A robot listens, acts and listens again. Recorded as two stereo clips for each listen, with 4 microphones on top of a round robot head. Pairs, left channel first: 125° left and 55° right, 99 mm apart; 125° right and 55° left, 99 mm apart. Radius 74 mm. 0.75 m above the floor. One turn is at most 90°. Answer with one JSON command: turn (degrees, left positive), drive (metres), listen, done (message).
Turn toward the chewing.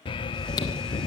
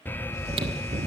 {"turn": 80}
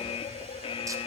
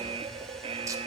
{"listen": true}
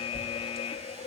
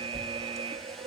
{"done": "Facing the chewing, 1 to 2 m away."}